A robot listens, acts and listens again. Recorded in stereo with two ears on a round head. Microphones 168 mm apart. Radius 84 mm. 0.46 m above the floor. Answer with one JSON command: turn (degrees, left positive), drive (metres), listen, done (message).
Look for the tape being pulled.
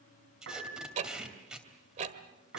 {"turn": -30}
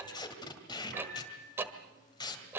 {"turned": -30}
{"turn": 25}
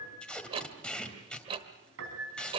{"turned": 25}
{"done": "Facing the tape being pulled, 2 to 4 m away."}